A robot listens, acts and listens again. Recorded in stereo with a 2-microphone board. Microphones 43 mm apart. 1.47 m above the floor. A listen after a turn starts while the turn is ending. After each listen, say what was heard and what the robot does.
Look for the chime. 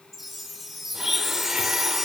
Turn 30° left.
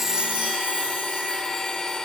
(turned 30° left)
Keep listening.
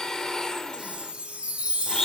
So it is at 30° right. Turn 30° right.
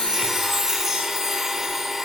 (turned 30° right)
Facing the chime, 1 to 2 m away.